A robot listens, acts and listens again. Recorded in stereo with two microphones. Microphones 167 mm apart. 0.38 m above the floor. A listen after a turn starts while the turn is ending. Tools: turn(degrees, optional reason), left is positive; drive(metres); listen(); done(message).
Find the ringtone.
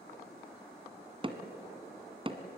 listen()
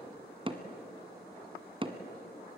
listen()
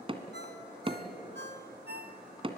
turn(degrees=-90)
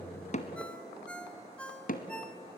done("Found it: a ringtone, straight ahead, 1 to 2 m away.")